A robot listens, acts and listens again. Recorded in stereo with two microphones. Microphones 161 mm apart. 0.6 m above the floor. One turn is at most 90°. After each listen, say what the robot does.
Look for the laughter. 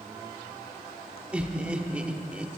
Turn 30° right.
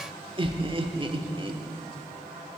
Turn 90° right.
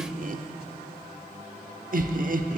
Turn 85° right.
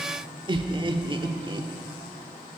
Turn 35° right.
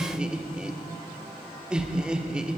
Found it: laughter, straight ahead, 1 to 2 m away.